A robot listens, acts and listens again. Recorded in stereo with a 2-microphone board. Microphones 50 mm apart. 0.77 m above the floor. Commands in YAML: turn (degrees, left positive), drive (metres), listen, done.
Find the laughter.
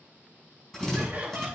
turn: -35
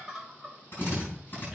done: "Facing the laughter."